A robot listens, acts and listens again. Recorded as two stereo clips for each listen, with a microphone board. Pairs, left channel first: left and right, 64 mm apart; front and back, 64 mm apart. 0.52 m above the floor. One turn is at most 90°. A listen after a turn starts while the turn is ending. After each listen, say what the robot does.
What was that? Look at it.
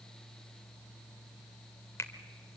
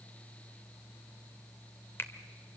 Turn 50° left.
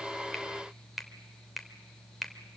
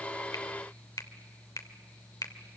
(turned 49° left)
Found it: a finger snap, straight ahead, 1 to 2 m away.